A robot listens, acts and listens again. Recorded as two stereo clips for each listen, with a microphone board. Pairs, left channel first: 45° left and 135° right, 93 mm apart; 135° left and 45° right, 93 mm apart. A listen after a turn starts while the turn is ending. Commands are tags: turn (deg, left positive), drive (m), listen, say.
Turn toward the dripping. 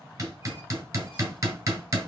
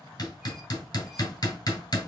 <listen/>
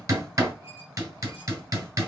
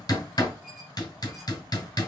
<listen/>
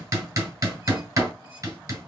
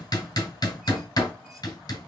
<say>I can't make out dripping, only hammering.</say>